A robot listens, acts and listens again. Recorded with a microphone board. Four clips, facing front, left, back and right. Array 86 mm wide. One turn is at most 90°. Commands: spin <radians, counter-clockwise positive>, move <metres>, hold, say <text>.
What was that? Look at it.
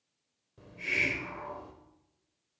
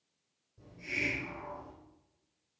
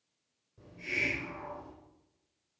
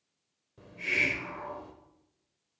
spin -1.05
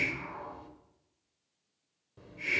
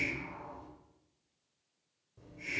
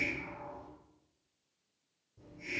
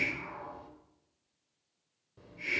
spin -0.35
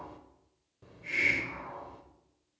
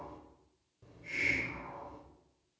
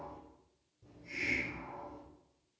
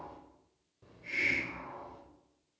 say Found it: a hiss, straight ahead, 1 to 2 m away.